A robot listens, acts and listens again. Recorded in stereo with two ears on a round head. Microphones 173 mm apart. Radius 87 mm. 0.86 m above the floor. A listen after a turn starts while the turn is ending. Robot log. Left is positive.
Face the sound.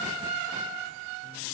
cmd idle
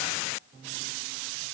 cmd idle
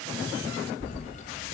note: The keys jangling: about 40° left or 140° left.
cmd yaw +40
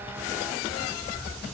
end: Facing the keys jangling, 2 to 4 m away.